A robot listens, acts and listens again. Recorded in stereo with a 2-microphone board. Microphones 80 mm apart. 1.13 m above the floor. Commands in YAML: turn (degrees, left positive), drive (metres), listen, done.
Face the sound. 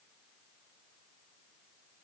listen: true
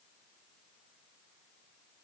listen: true
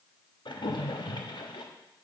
turn: 65
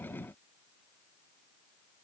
listen: true
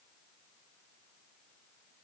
done: "I heard a splash, but can't make it out now. It was about straight ahead or 50° left."